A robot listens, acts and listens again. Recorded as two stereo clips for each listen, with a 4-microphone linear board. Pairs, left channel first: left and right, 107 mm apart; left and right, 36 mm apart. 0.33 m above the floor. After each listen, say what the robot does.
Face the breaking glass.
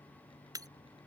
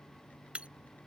Turn 35° right.
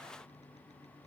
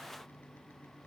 Keep listening.
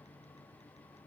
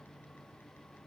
I heard breaking glass, but can't make it out now. It was about straight ahead or 110° right.